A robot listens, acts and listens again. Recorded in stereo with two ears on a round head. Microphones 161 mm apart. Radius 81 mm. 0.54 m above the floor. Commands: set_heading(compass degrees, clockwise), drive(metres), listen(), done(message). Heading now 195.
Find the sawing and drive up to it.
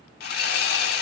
set_heading(135)
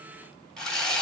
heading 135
drive(1.0)
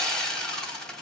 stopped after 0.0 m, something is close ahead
done("Something is in my way. I am facing the sawing but have not reached it.")